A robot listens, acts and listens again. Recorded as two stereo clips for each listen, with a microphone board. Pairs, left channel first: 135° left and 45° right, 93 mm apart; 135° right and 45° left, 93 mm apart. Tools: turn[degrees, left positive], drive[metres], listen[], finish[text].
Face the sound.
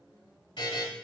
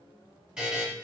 Thought: The buzzer: 120° left.
Action: turn[120]
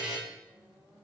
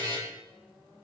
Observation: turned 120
Thought: The buzzer is now 30° left.
Action: turn[30]
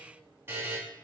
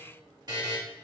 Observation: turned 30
Thought: The buzzer is now 10° left.
Action: turn[10]
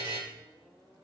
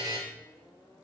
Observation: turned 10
Action: finish[Found it: a buzzer, straight ahead.]